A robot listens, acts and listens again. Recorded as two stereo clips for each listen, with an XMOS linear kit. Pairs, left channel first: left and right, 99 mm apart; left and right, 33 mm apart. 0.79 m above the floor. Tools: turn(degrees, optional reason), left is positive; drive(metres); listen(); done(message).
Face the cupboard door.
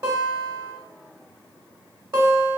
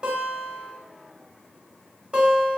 listen()
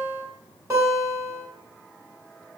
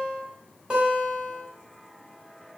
listen()
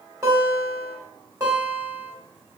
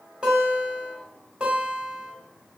done("I can't make out a cupboard door to turn to.")